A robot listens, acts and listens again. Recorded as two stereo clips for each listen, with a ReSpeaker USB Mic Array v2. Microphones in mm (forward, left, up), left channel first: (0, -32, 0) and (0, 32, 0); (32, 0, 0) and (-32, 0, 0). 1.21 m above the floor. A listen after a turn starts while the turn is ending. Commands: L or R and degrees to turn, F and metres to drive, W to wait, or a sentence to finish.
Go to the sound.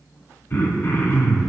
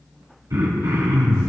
R145
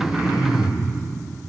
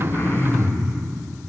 L45
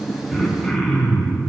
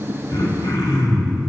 F1.0
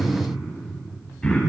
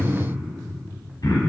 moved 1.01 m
R15
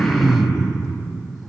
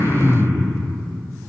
F1.0
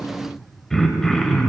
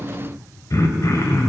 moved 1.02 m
F1.0
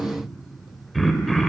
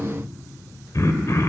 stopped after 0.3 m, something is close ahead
Arrived at the throat clearing, straight ahead.